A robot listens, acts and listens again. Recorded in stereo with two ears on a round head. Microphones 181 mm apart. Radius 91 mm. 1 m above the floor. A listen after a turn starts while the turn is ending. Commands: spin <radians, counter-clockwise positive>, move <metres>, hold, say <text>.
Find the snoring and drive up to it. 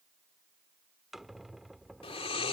spin 0.52
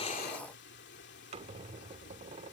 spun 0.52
spin 2.09
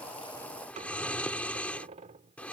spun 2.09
move 1.0
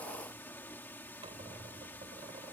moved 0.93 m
spin 0.17
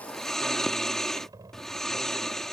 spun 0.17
move 1.0
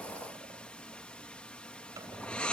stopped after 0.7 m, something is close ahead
say Arrived at the snoring, straight ahead.